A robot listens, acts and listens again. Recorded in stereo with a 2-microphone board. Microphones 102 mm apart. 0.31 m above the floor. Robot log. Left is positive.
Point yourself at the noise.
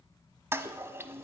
note: The toilet flushing: about 25° right or 155° right.
cmd yaw -25
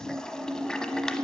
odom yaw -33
end: Found it: a toilet flushing, straight ahead.